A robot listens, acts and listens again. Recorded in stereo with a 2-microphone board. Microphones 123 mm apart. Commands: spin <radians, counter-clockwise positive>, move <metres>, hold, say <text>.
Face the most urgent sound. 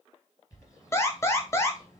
spin 0.35
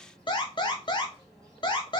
spin 2.36
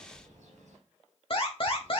spin 1.05
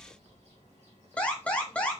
spin 0.17
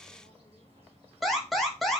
say Found it: an alarm, straight ahead, 1 to 2 m away.